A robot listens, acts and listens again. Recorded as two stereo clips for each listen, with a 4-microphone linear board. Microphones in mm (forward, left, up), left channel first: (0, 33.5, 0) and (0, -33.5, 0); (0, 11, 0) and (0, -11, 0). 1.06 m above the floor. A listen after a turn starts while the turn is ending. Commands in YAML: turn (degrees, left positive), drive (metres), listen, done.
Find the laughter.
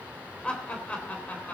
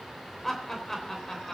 turn: 25
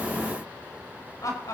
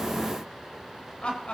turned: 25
turn: 120
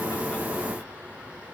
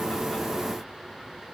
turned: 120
listen: true
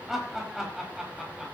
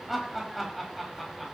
done: "Found it: laughter, straight ahead."